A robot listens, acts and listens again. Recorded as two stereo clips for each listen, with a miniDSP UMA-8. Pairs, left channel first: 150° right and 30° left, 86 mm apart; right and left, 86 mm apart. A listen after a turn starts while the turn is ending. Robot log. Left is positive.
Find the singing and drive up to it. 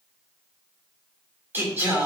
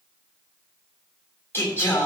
note: The singing: 30° right.
cmd yaw -30
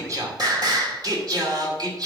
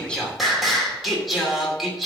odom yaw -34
cmd fwd 1.0
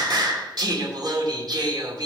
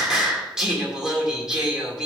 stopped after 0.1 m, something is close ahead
note: The singing is now 10° left.
cmd yaw +10
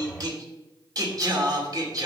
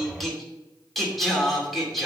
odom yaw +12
end: Something is in my way. I am facing the singing but have not reached it.